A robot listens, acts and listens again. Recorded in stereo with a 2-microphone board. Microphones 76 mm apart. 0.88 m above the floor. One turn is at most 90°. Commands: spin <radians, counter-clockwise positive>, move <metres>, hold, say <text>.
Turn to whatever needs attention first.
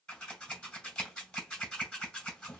hold
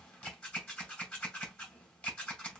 hold
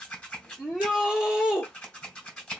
spin -0.52
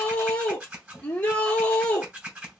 spin 0.26
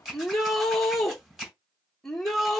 say Found it: a shout, straight ahead.